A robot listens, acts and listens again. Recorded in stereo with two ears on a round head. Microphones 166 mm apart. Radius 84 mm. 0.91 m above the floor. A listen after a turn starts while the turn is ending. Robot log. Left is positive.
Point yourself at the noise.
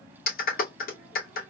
note: The clap: about 55° left or 125° left.
cmd yaw +55
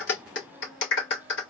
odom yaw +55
note: So it is at 70° left.
cmd yaw +70
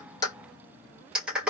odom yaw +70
end: Found it: a clap, straight ahead.